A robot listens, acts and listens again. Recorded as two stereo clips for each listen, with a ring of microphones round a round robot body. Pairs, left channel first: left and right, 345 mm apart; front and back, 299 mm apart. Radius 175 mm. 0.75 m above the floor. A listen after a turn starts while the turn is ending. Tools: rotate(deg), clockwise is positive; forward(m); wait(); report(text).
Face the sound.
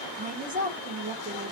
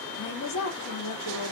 rotate(25)
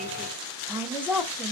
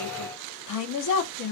report("Facing the woman speaking, under 1 m away.")